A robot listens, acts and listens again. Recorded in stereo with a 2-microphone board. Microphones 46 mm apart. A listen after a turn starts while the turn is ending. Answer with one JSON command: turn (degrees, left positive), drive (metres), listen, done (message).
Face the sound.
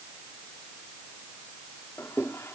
{"turn": 70}
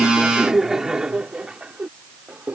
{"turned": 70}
{"turn": -30}
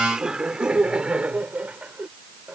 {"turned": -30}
{"turn": -30}
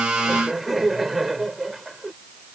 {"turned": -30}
{"done": "Facing the laughter."}